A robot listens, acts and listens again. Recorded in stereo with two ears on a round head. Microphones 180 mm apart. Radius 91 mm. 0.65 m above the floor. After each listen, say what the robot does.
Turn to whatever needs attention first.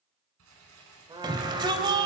Turn 20° right.
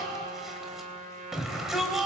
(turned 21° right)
Found it: a shout, straight ahead.